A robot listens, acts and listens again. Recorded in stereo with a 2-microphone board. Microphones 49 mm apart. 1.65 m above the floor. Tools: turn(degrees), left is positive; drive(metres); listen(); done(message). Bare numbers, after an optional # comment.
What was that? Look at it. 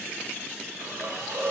# The hiss: about 70° right or 110° right.
turn(-70)
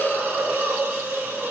# So it is at 40° right.
turn(-40)
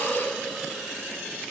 done("Found it: a hiss, straight ahead.")